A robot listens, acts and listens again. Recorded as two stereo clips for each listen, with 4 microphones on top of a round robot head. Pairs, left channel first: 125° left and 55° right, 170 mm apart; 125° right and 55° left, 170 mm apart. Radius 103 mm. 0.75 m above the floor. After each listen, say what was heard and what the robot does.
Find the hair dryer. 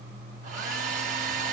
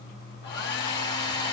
The hair dryer: 100° right. Turn 100° right.
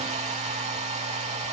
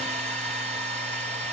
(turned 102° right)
Found it: a hair dryer, straight ahead, 1 to 2 m away.